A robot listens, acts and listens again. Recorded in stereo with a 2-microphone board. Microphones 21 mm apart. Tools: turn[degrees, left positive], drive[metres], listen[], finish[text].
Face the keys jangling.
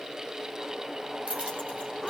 Action: turn[-90]
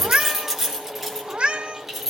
Action: finish[Facing the keys jangling.]